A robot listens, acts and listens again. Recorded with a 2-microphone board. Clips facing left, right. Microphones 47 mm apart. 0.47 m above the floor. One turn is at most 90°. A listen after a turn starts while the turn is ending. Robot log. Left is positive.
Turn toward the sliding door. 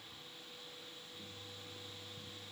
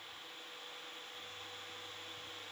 cmd idle
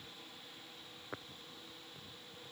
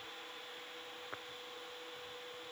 cmd idle
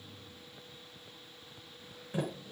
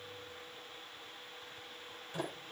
cmd yaw +30
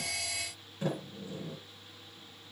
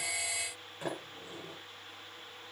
note: So it is at 15° right.
cmd yaw -15
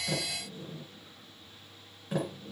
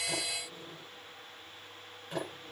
end: Facing the sliding door, over 4 m away.